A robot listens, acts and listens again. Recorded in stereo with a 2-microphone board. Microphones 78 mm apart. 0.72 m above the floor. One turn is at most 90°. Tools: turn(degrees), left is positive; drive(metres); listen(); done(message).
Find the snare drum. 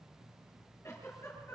listen()
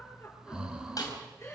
turn(degrees=50)
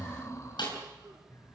turn(degrees=75)
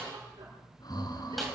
done("Found it: a snare drum, straight ahead, over 4 m away.")